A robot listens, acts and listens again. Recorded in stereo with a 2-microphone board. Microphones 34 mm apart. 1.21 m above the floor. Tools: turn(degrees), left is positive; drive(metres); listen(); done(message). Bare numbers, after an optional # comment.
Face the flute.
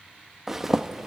listen()
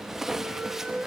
# The flute: about 45° right or 135° right.
turn(-45)
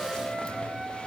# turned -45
done("Facing the flute.")